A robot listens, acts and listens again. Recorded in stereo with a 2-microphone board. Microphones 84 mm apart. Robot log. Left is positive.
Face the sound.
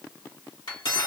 note: The cutlery clinking: about 75° left or 105° left.
cmd yaw +75
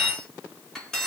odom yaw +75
end: Facing the cutlery clinking, 1 to 2 m away.